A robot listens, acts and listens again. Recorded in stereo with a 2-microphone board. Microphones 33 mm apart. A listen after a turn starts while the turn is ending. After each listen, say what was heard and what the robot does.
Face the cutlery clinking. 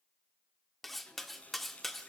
Turn 30° left.
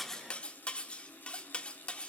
So it is at 145° left. Turn 145° left.
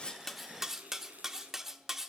The cutlery clinking is now 10° right. Turn 10° right.
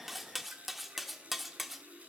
Found it: cutlery clinking, straight ahead.